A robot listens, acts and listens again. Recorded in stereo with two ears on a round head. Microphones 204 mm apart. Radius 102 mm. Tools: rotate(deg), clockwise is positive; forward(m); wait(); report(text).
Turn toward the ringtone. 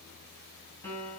wait()
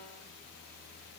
wait()
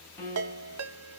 rotate(75)
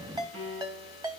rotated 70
rotate(20)
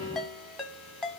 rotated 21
report("Found it: a ringtone, straight ahead.")